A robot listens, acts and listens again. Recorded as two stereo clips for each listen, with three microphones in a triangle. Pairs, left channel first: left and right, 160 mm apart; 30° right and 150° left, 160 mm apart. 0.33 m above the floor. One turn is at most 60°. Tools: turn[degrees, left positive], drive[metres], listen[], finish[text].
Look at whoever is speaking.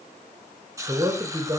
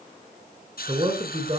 Thought: The man speaking: 160° right.
Action: turn[-60]
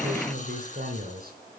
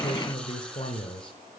Thought: The man speaking is now 85° right.
Action: turn[-60]
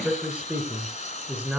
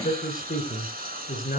Thought: The man speaking is now 10° right.
Action: turn[-10]
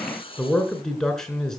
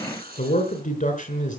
Action: finish[Found it: a man speaking, straight ahead, 2 to 4 m away.]